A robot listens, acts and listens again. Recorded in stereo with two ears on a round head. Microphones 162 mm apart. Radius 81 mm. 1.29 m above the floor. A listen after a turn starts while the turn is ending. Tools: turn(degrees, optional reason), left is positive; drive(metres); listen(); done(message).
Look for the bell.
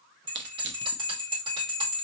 turn(degrees=-30, reason="The bell: about 30° right or 150° right.")
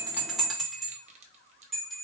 done("Found it: a bell, straight ahead.")